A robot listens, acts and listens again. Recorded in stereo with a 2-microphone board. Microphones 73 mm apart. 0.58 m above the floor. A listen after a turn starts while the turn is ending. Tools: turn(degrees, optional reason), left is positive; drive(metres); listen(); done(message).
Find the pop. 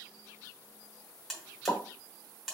turn(degrees=35, reason="The pop: about 35° left or 145° left.")
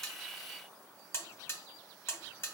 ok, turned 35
listen()
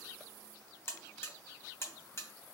done("I heard a pop, but can't make it out now. It was about straight ahead or 110° left.")